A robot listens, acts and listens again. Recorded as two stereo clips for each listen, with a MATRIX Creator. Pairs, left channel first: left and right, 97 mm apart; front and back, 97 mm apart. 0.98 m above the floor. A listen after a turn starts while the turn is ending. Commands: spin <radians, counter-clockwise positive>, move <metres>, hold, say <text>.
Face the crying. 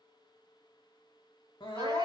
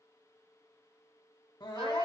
spin 0.79
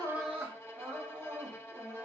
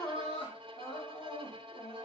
spin -0.44
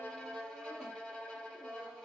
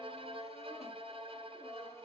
hold
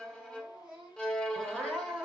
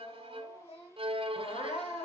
say Facing the crying.